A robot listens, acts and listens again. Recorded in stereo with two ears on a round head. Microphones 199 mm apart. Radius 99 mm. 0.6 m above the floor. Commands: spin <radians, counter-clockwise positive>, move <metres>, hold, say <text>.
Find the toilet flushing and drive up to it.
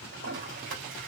spin -0.96
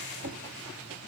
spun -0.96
spin -1.13
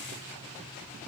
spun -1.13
hold
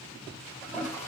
spin 0.17
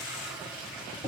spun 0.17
move 1.0
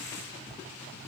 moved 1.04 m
hold
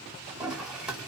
move 1.0
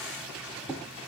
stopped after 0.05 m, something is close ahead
say Arrived at the toilet flushing, straight ahead.